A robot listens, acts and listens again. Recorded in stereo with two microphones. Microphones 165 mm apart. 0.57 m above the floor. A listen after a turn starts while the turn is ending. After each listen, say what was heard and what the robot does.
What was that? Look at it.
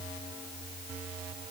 Keep listening.
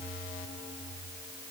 Keep listening.
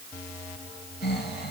Turn 90° left.
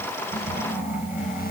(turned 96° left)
So it is at 10° right. Turn 10° right.
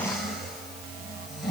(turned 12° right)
Facing the snoring, 2 to 4 m away.